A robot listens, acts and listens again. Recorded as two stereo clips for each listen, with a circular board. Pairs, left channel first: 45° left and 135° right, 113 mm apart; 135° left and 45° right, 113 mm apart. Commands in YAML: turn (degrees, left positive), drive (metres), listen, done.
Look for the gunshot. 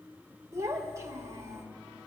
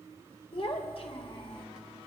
listen: true
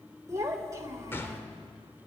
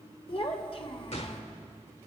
turn: 115
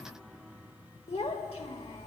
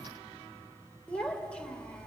done: "I heard a gunshot from this way, but can't make it out now."